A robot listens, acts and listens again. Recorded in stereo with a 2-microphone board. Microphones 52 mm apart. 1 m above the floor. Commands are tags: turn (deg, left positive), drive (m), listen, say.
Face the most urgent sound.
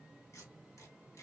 <listen/>
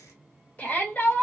<turn deg="30"/>
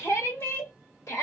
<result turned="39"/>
<turn deg="110"/>
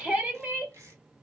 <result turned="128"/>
<turn deg="-15"/>
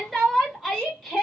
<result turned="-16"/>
<say>Facing the shout.</say>